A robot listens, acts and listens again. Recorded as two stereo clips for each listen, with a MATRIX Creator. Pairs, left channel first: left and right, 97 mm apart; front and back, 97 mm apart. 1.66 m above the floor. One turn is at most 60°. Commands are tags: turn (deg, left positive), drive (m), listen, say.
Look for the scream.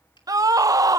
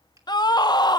<turn deg="-40"/>
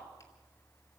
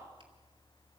<listen/>
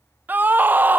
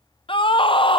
<turn deg="-20"/>
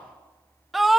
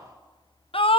<say>Found it: a scream, straight ahead, under 1 m away.</say>